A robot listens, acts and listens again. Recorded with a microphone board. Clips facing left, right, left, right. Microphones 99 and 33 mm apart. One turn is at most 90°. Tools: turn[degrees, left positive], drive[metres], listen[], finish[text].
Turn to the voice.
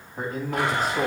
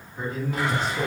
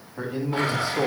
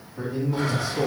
Thought: The man speaking: about 45° left or 135° left.
Action: turn[45]
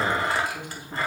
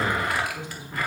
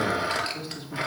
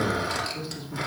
Thought: So it is at 80° left.
Action: turn[80]
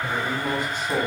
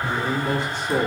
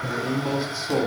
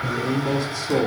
Thought: The man speaking is now 20° left.
Action: turn[20]
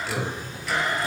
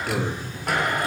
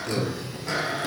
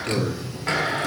Action: finish[Found it: a man speaking, straight ahead.]